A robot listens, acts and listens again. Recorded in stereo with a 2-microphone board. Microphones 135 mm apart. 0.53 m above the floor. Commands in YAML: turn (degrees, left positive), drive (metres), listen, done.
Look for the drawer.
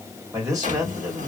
turn: -90
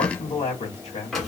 done: "Found it: a drawer, straight ahead, 1 to 2 m away."